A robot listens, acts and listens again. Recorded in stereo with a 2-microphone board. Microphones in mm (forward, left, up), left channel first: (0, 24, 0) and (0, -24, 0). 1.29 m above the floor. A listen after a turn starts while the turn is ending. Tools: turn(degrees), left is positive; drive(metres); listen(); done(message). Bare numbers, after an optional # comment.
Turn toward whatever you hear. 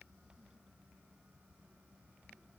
listen()
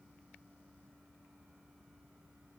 listen()
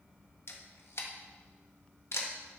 # The camera shutter: about 60° left or 120° left.
turn(60)
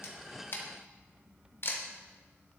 # So it is at 55° left.
turn(55)
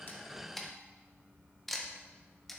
done("Facing the camera shutter.")